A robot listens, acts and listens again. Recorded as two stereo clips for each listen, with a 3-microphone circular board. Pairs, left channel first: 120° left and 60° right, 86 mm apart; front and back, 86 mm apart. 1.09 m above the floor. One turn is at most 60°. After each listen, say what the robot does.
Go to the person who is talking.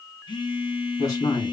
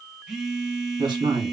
Turn 60° left.
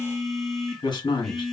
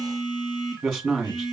Turn 60° left.
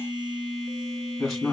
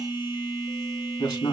Turn 30° left.
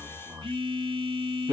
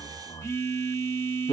Drive 1.0 m forward.
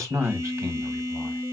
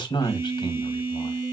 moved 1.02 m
Drive 1.0 m forward.
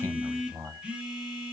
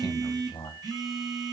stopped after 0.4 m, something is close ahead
Turn 10° right.
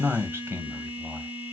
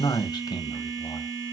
Arrived at the man speaking, straight ahead.